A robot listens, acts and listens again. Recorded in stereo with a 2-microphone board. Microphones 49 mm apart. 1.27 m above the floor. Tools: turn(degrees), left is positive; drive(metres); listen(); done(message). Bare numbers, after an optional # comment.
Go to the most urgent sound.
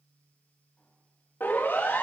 # The siren: about 45° left or 135° left.
turn(45)
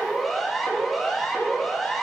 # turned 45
drive(1.0)
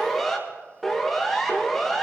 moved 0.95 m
drive(1.0)
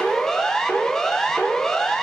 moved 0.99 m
# The siren is now 10° left.
turn(10)
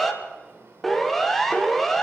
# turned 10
drive(1.0)
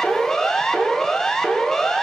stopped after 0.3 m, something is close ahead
# The siren is now 10° left.
turn(10)
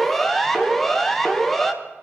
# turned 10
done("I am next to the siren.")